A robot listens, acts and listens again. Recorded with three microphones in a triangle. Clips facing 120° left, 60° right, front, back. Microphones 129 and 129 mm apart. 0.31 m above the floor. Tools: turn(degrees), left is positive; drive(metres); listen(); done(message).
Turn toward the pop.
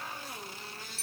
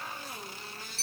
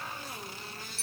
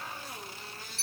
listen()
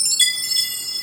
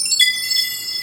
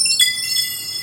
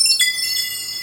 listen()
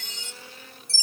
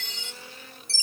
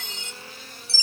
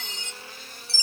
done("I can't make out a pop to turn to.")